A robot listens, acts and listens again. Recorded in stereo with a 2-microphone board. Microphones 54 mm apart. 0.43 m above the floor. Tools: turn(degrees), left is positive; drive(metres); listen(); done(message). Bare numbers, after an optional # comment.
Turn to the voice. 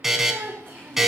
# The child speaking: about 45° right or 135° right.
turn(-45)
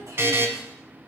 # So it is at 75° right.
turn(-75)
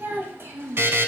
# The child speaking is now 50° right.
turn(-50)
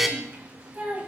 # The child speaking is now 35° right.
turn(-35)
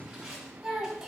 # The child speaking is now 10° right.
turn(-10)
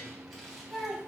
done("Found it: a child speaking, straight ahead, 1 to 2 m away.")